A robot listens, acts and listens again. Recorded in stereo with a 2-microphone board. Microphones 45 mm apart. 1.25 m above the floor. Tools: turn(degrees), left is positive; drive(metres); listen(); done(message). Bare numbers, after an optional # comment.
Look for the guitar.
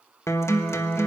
turn(90)
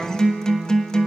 # So it is at 15° left.
turn(15)
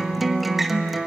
done("Found it: a guitar, straight ahead.")